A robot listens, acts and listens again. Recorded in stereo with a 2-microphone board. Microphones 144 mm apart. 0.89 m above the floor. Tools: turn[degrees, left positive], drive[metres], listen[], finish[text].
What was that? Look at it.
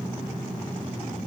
Action: listen[]
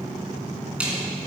Action: turn[-30]
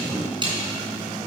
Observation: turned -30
Thought: So it is at 145° right.
Action: turn[-145]
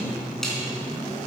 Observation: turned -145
Action: finish[Facing the snare drum.]